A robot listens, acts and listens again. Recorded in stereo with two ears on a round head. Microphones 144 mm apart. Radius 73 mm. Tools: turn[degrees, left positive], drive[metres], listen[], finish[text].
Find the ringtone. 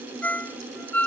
Action: turn[30]
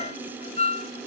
Thought: So it is at 140° left.
Action: turn[140]
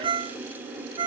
Thought: The ringtone is now 30° right.
Action: turn[-30]
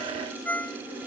Thought: The ringtone is now 10° left.
Action: turn[10]
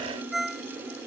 Action: finish[Facing the ringtone.]